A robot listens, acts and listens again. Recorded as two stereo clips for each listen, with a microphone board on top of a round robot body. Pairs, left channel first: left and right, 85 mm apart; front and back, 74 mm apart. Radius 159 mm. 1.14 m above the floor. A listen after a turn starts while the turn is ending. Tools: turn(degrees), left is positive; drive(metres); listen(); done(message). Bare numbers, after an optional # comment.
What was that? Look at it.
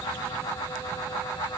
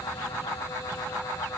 listen()
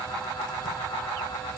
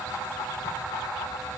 listen()
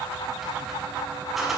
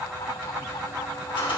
done("Found it: a squeak, straight ahead.")